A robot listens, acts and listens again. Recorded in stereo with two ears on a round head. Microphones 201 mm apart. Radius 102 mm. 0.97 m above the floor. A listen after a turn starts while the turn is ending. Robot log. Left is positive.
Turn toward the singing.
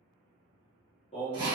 note: The singing: about 30° left or 150° left.
cmd yaw +30
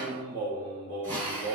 note: So it is at 120° left.
cmd yaw +120
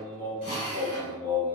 note: The singing is now 15° left.
cmd yaw +15
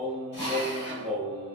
end: Facing the singing, 1 to 2 m away.